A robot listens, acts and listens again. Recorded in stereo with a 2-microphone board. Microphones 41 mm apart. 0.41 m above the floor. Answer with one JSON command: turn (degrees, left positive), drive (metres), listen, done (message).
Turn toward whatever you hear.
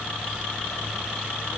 {"listen": true}
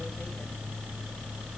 {"listen": true}
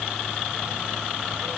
{"done": "I can't make out anything."}